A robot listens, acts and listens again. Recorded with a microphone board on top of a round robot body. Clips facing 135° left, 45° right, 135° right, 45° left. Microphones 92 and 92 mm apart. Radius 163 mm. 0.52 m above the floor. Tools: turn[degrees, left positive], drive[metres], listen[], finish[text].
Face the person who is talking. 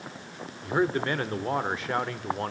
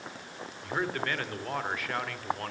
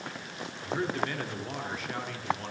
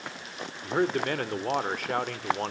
Thought: The man speaking: 70° left.
Action: turn[70]
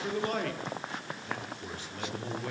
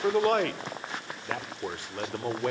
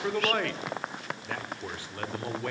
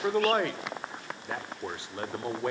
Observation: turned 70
Thought: The man speaking is now 20° right.
Action: turn[-20]
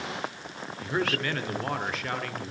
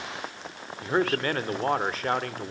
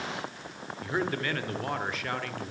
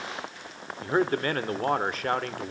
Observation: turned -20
Action: finish[Facing the man speaking.]